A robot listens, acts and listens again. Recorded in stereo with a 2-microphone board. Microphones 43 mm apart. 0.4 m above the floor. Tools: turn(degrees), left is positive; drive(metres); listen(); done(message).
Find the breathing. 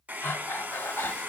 turn(degrees=65)
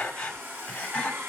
turn(degrees=25)
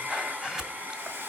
turn(degrees=-10)
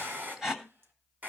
done("Found it: breathing, straight ahead.")